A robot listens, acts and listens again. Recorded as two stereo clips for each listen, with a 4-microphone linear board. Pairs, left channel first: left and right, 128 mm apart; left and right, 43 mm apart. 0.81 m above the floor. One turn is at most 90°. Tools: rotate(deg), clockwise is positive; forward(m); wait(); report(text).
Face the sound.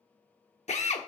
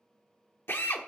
rotate(-65)
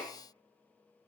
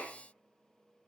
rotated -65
wait()
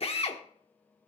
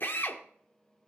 rotate(-50)
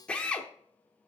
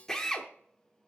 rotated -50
rotate(-10)
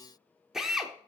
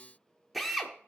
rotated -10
report("Found it: a drill, straight ahead.")